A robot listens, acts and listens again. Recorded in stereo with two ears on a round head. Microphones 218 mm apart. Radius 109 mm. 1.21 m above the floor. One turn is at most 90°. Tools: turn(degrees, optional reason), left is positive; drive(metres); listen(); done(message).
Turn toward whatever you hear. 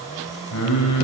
turn(degrees=90)
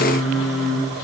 done("Facing the singing, over 4 m away.")